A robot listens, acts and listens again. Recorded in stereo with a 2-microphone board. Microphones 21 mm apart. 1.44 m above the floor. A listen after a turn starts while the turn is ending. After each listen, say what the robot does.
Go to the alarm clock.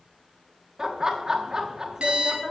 Turn 60° right.
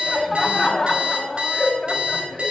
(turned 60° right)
Turn 60° right.
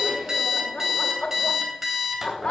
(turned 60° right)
Turn 15° right.
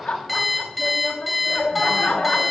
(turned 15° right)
Drive 1.0 m forward.
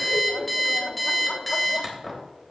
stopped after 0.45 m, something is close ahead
Turn 10° left.
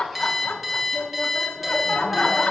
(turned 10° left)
Blocked. The alarm clock is further on, straight ahead.